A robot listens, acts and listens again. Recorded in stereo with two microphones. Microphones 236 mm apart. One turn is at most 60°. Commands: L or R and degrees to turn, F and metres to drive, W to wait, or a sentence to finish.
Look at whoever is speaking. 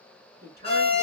R45
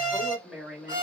Found it: a woman speaking, straight ahead, 2 to 4 m away.